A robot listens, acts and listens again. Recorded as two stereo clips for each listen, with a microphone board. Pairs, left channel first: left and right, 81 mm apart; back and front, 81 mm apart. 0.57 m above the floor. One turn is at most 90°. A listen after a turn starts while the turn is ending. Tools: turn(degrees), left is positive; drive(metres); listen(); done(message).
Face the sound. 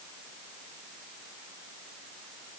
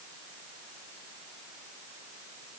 listen()
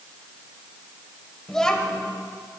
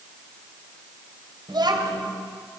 turn(degrees=10)
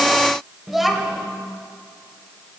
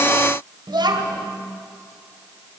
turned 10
done("Facing the child speaking.")